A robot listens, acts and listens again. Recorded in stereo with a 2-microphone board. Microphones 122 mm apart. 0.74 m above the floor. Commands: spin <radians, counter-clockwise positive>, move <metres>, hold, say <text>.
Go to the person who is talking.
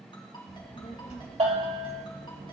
spin 1.57
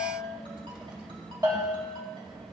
spin -0.17
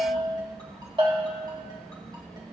move 1.0
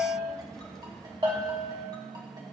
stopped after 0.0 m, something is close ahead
hold
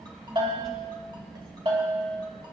say Blocked. The child speaking is further on, straight ahead.